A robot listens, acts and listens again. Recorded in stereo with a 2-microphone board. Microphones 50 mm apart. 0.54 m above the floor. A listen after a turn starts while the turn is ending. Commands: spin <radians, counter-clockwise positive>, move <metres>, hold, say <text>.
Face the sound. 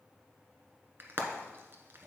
spin -0.79
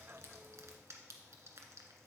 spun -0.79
hold
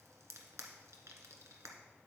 spin -1.57
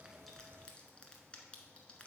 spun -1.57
hold
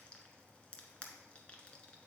spin 0.35
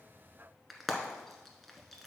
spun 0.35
say Found it: frying, straight ahead, 1 to 2 m away.